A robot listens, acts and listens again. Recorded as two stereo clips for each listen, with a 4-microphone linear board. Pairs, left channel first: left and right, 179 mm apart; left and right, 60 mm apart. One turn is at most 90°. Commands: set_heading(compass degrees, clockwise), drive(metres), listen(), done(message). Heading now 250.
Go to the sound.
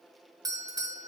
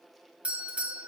set_heading(270)
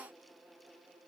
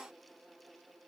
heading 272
listen()
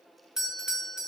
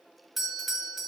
drive(1.0)
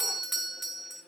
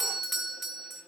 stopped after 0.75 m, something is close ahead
done("I am next to the doorbell.")